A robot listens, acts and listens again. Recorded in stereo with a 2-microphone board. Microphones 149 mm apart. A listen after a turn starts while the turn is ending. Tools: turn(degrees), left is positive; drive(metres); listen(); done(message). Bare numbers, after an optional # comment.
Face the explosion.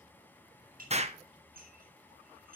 # The explosion: about 45° right or 135° right.
turn(-45)
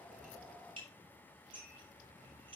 listen()
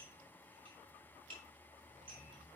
done("I heard an explosion, but can't make it out now. It was about straight ahead or 90° right.")